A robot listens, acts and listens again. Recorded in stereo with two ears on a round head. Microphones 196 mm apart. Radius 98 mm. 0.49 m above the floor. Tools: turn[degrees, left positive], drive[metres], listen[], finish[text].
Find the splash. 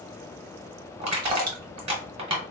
Action: turn[-90]
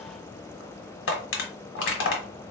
Action: finish[Facing where the splash came from. I can't hear it now.]